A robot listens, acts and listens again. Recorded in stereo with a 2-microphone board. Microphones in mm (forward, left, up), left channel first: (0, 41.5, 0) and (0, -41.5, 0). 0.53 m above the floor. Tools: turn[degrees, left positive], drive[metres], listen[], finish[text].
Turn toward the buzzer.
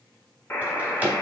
Thought: The buzzer: about 25° left or 155° left.
Action: turn[25]
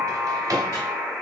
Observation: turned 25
Action: finish[Found it: a buzzer, straight ahead.]